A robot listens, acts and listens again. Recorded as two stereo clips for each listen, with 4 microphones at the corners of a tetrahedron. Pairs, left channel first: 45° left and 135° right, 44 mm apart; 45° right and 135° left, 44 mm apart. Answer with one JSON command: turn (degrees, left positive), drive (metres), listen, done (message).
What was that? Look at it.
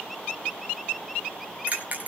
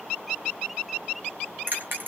{"turn": 170}
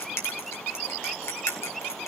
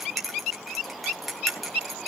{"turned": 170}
{"turn": 45}
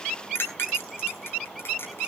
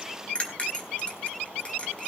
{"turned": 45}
{"turn": 20}
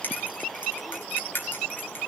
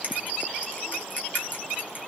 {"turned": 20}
{"done": "Found it: a bell, straight ahead."}